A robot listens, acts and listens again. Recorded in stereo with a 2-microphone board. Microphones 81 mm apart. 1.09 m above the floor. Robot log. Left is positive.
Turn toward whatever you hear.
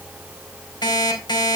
note: The alarm clock: about 60° left or 120° left.
cmd yaw +60
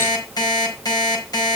note: So it is at 55° left.
cmd yaw +55
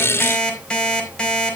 note: The alarm clock is now 10° left.
cmd yaw +10
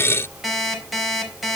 end: Found it: an alarm clock, straight ahead.